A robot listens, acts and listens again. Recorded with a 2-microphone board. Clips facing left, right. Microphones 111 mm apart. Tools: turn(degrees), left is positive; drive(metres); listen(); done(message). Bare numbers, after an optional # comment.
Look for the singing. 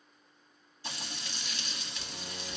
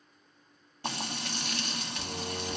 # The singing: about 40° right or 140° right.
turn(-40)
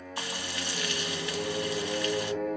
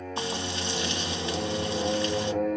# So it is at 100° right.
turn(-100)
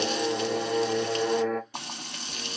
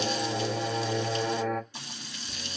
done("Found it: singing, straight ahead.")